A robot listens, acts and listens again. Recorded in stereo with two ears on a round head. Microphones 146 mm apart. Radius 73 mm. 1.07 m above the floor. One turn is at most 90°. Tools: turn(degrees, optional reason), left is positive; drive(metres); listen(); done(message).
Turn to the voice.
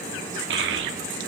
turn(degrees=-90)
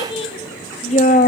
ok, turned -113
turn(degrees=50, reason="So it is at 50° left.")
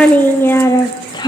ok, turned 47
turn(degrees=25, reason="The child speaking is now 25° left.")
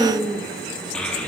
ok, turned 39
turn(degrees=10, reason="The child speaking is now 10° left.")
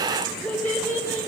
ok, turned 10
turn(degrees=10, reason="The child speaking is now 10° left.")
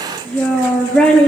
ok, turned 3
done("Facing the child speaking, 1 to 2 m away.")